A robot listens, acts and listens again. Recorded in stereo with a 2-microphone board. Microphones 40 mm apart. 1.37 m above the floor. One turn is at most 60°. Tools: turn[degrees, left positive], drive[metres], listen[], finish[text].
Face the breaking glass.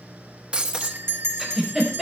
Thought: The breaking glass: about 30° right or 150° right.
Action: turn[-30]
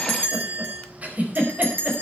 Action: listen[]
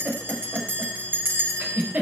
Action: finish[I heard breaking glass, but can't make it out now. It was about straight ahead or 120° right.]